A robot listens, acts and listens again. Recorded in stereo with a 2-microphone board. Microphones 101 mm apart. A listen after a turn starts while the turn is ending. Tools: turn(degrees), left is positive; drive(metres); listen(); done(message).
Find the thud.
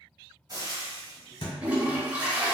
turn(degrees=55)
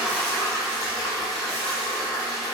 listen()
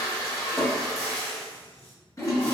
done("I heard a thud, but can't make it out now. It was about straight ahead or 70° left.")